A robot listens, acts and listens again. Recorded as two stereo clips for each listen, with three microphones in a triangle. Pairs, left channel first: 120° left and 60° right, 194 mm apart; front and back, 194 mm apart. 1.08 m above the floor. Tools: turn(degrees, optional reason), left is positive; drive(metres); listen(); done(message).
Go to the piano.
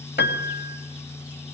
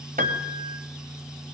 turn(degrees=140, reason="The piano: 140° left.")
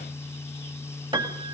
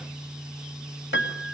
drive(metres=1.0)
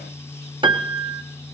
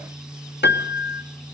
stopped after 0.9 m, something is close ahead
done("I am next to the piano.")